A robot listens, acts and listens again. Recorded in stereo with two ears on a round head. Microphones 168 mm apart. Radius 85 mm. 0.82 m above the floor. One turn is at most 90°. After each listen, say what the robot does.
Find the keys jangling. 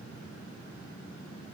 Keep listening.
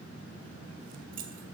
Turn 50° right.
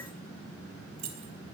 Turn 70° right.
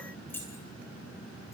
Turn 10° left.
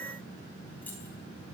Turn 10° left.
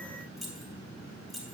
Facing the keys jangling.